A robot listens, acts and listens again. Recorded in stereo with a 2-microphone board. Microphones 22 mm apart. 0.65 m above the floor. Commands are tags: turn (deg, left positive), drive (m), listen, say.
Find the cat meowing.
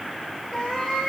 <turn deg="20"/>
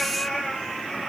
<turn deg="135"/>
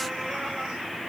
<listen/>
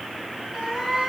<turn deg="10"/>
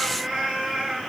<say>Found it: a cat meowing, straight ahead, over 4 m away.</say>